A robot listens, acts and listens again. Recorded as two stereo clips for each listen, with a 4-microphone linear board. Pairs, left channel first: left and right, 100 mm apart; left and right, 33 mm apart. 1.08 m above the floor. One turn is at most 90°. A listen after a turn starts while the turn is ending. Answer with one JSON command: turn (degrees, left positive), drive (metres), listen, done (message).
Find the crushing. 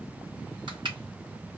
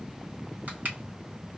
{"turn": -50}
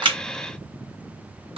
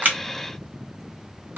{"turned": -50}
{"listen": true}
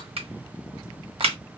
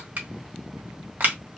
{"turn": -75}
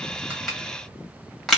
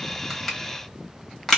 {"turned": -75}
{"turn": 10}
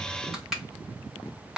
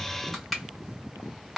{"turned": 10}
{"done": "Found it: crushing, straight ahead, 1 to 2 m away."}